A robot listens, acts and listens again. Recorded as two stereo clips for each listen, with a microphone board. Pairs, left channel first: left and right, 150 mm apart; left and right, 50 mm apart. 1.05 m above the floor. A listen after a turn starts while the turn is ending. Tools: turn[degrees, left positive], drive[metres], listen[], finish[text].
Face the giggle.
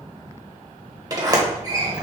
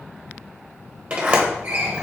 Action: listen[]
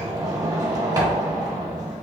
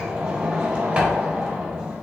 Action: listen[]
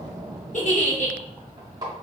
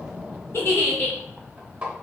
Thought: The giggle: about 55° left or 125° left.
Action: turn[55]
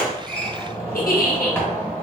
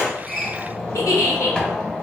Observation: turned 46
Thought: So it is at 80° left.
Action: turn[80]
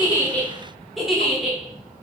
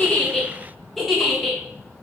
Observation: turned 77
Action: finish[Found it: a giggle, straight ahead, under 1 m away.]